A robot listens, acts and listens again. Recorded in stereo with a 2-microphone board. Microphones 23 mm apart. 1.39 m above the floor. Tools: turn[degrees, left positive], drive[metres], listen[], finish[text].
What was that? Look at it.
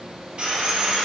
Thought: The sawing: about 55° right or 125° right.
Action: turn[-55]
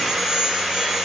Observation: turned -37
Thought: So it is at 15° right.
Action: turn[-15]
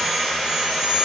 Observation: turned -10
Action: finish[Facing the sawing.]